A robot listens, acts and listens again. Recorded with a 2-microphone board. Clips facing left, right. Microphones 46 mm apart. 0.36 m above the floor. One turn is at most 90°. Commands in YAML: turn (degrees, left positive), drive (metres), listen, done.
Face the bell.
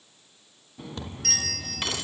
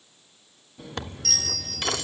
turn: 50
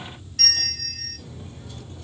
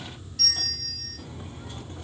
turn: 70
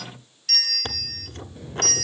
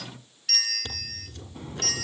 turn: -20
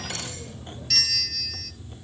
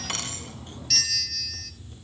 done: "Found it: a bell, straight ahead, 1 to 2 m away."